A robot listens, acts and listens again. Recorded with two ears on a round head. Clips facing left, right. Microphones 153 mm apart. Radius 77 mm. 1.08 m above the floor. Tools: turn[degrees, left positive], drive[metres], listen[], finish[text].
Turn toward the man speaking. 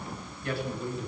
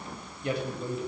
Thought: The man speaking: about 15° right or 165° right.
Action: turn[-15]
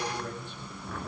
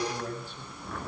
Thought: So it is at 150° right.
Action: turn[-150]
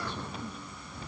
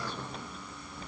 Action: listen[]
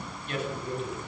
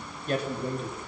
Thought: The man speaking is now 35° right.
Action: turn[-35]
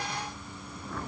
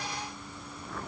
Action: listen[]
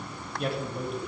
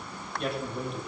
Action: finish[Facing the man speaking, over 4 m away.]